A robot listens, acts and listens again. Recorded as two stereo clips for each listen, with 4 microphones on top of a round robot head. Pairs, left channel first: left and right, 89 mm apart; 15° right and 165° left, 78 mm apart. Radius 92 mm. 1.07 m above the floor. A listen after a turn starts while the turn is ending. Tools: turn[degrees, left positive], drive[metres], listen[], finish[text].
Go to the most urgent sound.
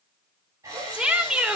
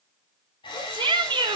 Thought: The shout: 165° right.
Action: turn[-165]
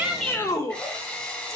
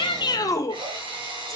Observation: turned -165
Thought: The shout is now 35° left.
Action: turn[35]
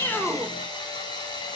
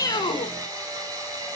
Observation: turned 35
Action: listen[]
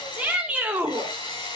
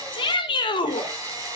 Thought: The shout is now 10° right.
Action: turn[-10]
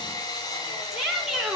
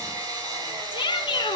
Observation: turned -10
Action: drive[1.0]
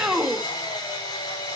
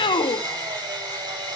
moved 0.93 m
Action: drive[1.0]
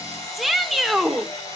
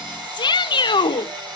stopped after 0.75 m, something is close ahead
Action: finish[Arrived at the shout, straight ahead.]